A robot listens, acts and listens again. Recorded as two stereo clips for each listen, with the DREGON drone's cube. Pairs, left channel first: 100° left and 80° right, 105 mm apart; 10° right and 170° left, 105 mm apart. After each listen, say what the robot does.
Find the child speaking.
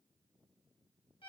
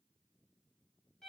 Keep listening.
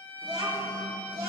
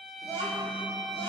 Turn 65° right.
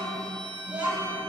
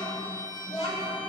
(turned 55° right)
Found it: a child speaking, straight ahead, 2 to 4 m away.